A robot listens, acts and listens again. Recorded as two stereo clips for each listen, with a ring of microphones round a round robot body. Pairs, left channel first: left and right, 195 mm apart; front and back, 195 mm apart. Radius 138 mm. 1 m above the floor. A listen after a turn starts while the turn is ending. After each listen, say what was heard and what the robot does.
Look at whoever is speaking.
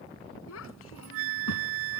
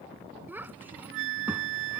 The child speaking: 100° left. Turn 100° left.
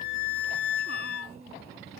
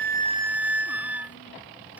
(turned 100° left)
Keep listening.
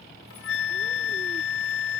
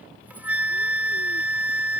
Keep listening.
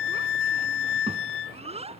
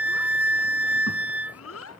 The child speaking is now 30° right. Turn 30° right.
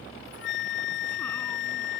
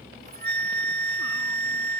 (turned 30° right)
Keep listening.
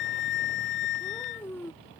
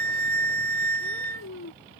The child speaking is now 10° left. Turn 10° left.
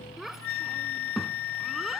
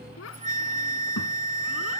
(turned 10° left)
Found it: a child speaking, straight ahead.